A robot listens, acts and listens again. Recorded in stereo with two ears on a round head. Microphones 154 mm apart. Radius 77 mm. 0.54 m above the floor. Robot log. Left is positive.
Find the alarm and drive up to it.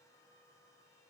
cmd idle
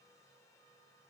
cmd idle
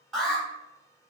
cmd yaw +30
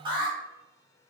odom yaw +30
note: So it is at 30° right.
cmd yaw -30
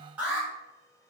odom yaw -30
note: The alarm is now 10° right.
cmd yaw -10
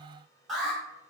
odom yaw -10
cmd fwd 1.0
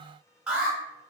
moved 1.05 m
cmd fwd 1.0
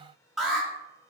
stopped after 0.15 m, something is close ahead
end: I am next to the alarm.